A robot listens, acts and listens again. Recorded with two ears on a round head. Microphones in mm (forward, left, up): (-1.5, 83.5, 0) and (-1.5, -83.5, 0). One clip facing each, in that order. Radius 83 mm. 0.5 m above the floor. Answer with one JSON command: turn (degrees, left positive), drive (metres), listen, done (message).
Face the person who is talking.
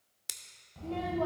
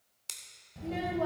{"turn": -20}
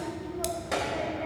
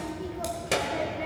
{"turn": -140}
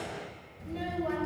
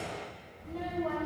{"turn": 30}
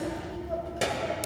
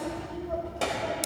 {"turn": 20}
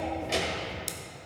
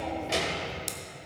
{"done": "Found it: a child speaking, straight ahead, 1 to 2 m away."}